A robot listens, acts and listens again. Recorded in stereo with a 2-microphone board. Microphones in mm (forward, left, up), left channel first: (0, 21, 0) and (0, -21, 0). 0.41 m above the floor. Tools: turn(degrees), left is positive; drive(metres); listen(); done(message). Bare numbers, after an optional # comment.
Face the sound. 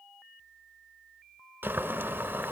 # The boiling: about 60° right or 120° right.
turn(-60)
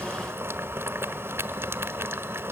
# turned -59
# So it is at 60° right.
turn(-60)
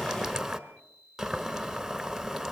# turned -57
done("Facing the boiling.")